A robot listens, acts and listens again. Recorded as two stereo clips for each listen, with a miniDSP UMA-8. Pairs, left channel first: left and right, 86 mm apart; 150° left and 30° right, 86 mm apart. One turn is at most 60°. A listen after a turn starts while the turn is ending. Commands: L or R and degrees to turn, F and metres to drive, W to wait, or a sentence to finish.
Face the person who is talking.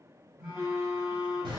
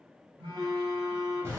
W
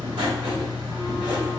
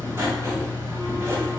W
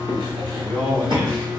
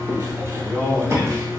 R60
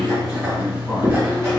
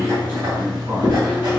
R20
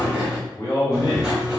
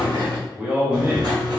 L35
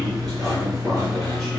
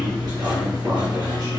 W
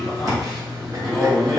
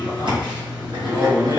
Facing the man speaking.